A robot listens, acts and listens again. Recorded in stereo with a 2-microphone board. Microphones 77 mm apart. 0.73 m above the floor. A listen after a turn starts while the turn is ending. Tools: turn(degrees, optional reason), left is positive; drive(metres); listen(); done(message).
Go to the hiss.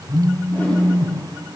listen()
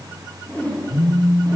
listen()
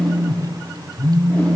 done("I can't make out a hiss to turn to.")